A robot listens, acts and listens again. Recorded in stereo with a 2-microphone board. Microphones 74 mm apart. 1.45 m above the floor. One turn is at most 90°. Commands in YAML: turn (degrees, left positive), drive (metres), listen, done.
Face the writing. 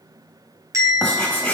turn: 30
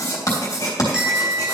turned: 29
turn: 90
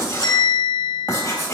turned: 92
turn: 45
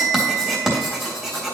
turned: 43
done: "Found it: writing, straight ahead."